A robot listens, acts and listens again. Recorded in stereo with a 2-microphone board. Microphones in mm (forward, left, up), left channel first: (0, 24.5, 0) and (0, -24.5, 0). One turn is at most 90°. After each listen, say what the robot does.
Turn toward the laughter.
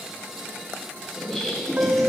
Turn 30° left.
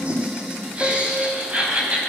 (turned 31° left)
Turn 25° right.
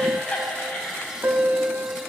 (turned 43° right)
Turn 20° left.
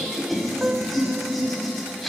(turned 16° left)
Found it: laughter, straight ahead, over 4 m away.